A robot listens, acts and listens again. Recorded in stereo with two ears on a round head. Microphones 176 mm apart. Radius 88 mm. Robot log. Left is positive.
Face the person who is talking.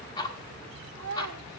cmd yaw -90
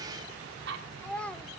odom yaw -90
end: Facing the child speaking, 1 to 2 m away.